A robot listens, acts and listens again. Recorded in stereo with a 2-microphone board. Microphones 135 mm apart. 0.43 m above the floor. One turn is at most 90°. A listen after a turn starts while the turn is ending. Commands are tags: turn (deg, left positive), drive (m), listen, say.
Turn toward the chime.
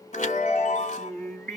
<turn deg="70"/>
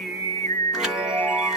<say>Facing the chime, 1 to 2 m away.</say>